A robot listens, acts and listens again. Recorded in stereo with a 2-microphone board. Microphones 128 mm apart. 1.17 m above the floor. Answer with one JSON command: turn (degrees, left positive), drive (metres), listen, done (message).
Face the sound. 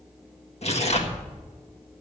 {"turn": 60}
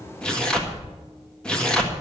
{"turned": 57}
{"done": "Found it: tearing paper, straight ahead, 1 to 2 m away."}